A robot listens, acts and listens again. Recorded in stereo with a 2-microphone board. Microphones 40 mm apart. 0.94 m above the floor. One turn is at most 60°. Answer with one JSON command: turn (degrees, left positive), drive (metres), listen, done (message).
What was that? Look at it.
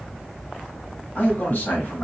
{"turn": 55}
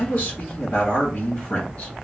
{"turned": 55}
{"turn": 40}
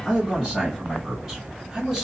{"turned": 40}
{"done": "Facing the man speaking, 1 to 2 m away."}